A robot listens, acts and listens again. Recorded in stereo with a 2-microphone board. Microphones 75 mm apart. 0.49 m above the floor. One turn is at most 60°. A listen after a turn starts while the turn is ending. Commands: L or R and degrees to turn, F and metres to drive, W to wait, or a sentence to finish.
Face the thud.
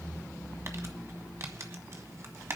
W
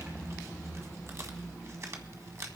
W
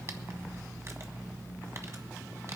I can't make out a thud to turn to.